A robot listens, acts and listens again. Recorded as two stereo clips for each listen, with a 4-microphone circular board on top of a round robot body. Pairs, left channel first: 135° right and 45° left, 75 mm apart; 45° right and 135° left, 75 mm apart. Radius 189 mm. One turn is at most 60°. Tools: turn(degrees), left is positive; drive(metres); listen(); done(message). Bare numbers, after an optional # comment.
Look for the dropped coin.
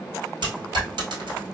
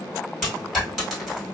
# The dropped coin: 45° left.
turn(45)
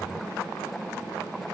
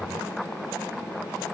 done("Facing where the dropped coin came from. I can't hear it now.")